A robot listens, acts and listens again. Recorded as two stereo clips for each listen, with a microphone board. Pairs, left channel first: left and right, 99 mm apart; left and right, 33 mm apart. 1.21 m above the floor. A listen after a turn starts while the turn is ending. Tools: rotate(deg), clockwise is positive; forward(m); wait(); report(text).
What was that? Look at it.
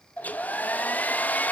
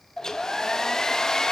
rotate(-15)
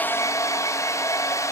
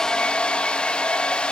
rotate(-150)
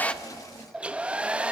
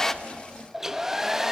rotate(10)
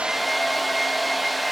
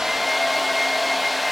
report("Facing the hair dryer, under 1 m away.")